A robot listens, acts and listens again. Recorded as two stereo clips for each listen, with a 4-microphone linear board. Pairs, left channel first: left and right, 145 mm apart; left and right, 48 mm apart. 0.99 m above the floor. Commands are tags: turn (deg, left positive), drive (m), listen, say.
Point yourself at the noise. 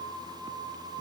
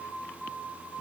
<listen/>
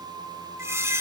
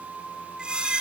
<turn deg="-15"/>
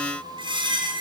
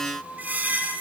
<turn deg="-150"/>
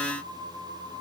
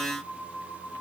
<listen/>
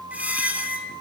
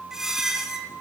<turn deg="-10"/>
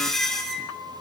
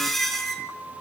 <say>Facing the squeak, 2 to 4 m away.</say>